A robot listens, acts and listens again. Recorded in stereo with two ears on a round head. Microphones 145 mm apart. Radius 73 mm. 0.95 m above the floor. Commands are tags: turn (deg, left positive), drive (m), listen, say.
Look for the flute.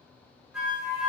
<turn deg="-30"/>
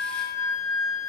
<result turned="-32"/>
<turn deg="25"/>
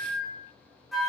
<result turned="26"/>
<say>Found it: a flute, straight ahead, 1 to 2 m away.</say>